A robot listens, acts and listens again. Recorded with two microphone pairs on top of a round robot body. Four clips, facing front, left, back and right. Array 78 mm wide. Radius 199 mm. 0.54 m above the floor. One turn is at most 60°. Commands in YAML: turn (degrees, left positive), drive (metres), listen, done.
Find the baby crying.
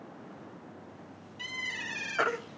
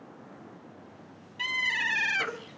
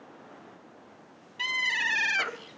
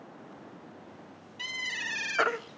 turn: -60
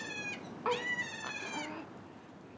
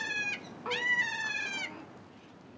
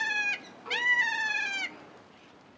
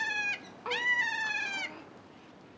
listen: true
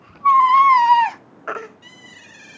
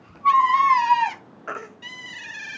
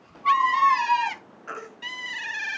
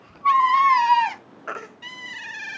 done: "Facing the baby crying."